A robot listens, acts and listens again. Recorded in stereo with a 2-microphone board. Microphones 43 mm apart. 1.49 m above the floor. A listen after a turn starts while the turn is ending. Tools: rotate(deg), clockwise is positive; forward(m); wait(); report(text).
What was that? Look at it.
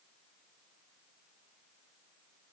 wait()
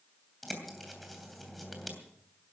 rotate(-30)
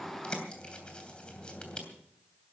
rotate(-150)
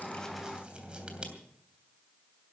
rotate(30)
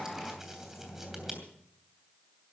rotate(10)
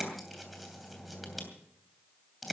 report("Found it: a bird, straight ahead.")